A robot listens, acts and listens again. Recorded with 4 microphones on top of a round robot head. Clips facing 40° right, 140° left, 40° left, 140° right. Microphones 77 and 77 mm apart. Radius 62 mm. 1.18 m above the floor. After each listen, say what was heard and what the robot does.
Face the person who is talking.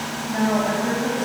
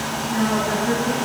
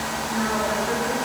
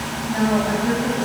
The woman speaking: 90° right. Turn 90° right.
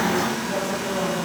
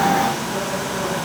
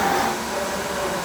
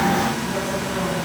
Keep listening.
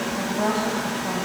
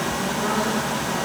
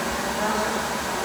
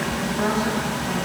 Keep listening.
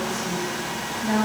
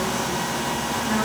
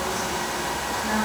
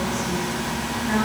The woman speaking is now 35° right. Turn 35° right.
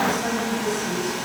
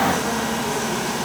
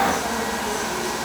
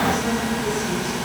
Keep listening.
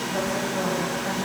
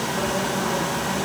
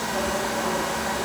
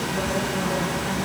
Keep listening.
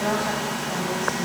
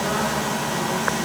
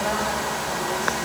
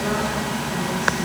Facing where the woman speaking came from. I can't hear it now.